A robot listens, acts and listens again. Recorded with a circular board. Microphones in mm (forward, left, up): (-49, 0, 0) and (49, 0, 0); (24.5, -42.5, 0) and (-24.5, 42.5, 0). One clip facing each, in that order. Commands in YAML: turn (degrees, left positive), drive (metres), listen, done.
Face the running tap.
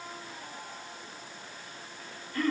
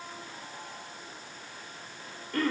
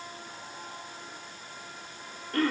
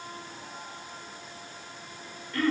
listen: true
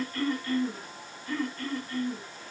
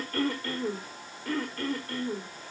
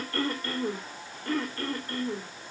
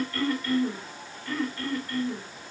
listen: true
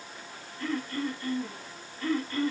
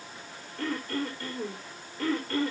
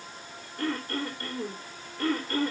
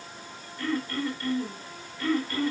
done: "I can't make out a running tap to turn to."